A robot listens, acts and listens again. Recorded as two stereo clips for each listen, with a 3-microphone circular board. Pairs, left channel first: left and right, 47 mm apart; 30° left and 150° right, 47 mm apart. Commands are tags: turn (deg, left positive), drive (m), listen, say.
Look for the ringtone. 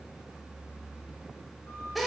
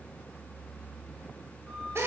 <listen/>
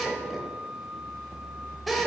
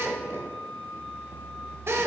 <listen/>
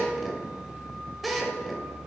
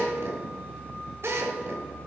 <say>I can't make out a ringtone, only a drill and a flute.</say>